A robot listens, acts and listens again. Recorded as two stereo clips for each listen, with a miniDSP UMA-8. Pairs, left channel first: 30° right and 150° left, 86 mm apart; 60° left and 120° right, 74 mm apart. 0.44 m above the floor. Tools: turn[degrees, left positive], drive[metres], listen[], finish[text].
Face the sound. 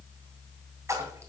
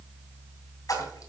Thought: The splash: 95° left.
Action: turn[95]
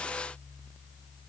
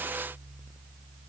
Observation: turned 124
Thought: Nothing new. It was at 30° right.
Action: turn[-30]
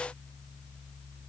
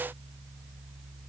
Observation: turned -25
Action: finish[Facing where the splash came from. I can't hear it now.]